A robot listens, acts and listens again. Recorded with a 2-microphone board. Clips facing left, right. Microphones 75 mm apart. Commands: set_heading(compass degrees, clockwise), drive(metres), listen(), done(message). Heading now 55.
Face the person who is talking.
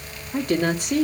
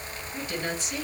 set_heading(355)
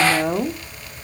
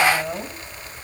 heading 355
set_heading(295)
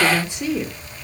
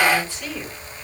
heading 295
set_heading(275)
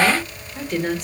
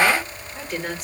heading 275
done("Facing the woman speaking.")